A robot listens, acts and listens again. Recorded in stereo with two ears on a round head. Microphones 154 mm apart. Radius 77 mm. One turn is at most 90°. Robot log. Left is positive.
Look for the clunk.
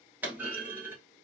cmd yaw -30
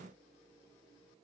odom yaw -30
cmd idle
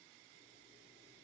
end: I heard a clunk, but can't make it out now. It was about 20° left or 140° right.